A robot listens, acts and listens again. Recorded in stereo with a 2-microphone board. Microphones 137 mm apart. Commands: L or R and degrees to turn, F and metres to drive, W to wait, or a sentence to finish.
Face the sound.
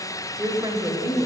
R25
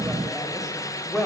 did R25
Found it: a woman speaking, straight ahead, 1 to 2 m away.